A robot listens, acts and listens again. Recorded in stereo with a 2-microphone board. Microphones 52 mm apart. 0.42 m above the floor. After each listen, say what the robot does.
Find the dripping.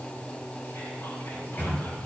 Keep listening.
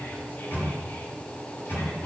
Keep listening.
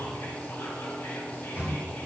I can't make out dripping, only a microwave.